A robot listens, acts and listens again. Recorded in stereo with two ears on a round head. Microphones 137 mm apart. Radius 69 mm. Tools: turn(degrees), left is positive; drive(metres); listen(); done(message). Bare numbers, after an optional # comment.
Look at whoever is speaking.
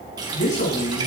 # The man speaking: about 55° left or 125° left.
turn(55)
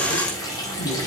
# So it is at 75° left.
turn(75)
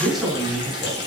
done("Facing the man speaking.")